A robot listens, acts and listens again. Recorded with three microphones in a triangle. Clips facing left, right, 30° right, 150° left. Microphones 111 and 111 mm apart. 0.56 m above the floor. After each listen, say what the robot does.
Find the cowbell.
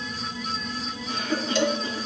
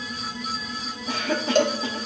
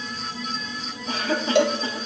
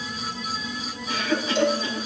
Turn 45° right.
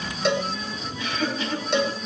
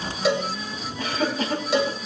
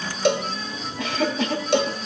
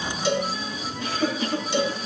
Found it: a cowbell, straight ahead, under 1 m away.